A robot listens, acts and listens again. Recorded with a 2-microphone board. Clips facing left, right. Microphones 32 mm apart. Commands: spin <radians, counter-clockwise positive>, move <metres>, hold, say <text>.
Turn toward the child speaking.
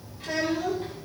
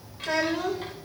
spin -1.13
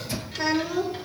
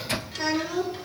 spin 0.26
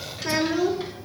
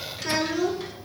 spin 0.26
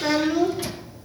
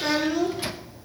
spin 0.17
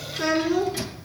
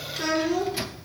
spin 0.26
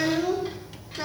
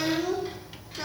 spin 0.17
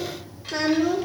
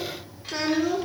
say Facing the child speaking.